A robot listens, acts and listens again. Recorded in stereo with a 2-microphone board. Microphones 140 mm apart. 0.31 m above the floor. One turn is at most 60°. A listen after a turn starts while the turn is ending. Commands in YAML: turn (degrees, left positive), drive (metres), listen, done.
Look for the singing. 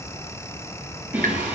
turn: -15
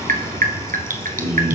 turn: -35
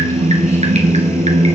turn: -60
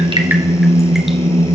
turn: -45
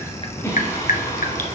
turn: 30
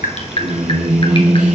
done: "Found it: singing, straight ahead, over 4 m away."